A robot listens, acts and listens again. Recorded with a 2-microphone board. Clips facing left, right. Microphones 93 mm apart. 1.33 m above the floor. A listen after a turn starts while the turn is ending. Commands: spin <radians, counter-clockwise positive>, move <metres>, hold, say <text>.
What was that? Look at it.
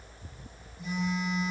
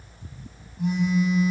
spin -1.13
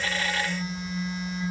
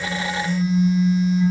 say Found it: a phone buzzing, straight ahead.